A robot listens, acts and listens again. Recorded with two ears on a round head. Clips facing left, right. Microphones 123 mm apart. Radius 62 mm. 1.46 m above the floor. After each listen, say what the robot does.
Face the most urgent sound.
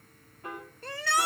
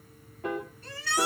Turn 45° left.
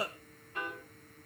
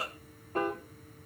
Turn 90° left.
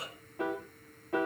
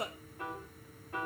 Turn 40° right.
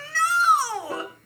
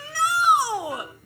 Turn 15° right.
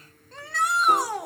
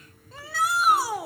Found it: a shout, straight ahead.